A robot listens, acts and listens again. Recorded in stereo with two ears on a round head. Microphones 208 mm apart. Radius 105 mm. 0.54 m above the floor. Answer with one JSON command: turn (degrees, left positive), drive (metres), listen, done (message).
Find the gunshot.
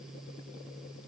{"listen": true}
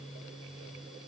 {"listen": true}
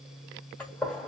{"turn": 30}
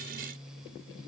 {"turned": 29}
{"listen": true}
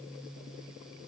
{"done": "I heard a gunshot, but can't make it out now. It was about 20° right or 145° left."}